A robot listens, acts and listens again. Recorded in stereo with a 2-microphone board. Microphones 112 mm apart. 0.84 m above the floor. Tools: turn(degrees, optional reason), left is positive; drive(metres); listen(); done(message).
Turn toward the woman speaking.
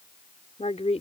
turn(degrees=90)
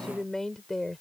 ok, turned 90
done("Found it: a woman speaking, straight ahead.")